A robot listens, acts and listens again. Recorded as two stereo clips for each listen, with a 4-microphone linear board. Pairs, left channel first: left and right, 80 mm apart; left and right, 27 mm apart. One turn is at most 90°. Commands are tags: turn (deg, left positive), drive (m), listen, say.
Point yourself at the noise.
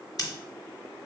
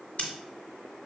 <turn deg="50"/>
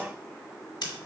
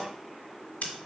<turn deg="75"/>
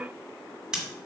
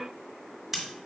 <turn deg="-10"/>
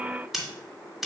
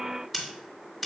<say>Facing the scissors.</say>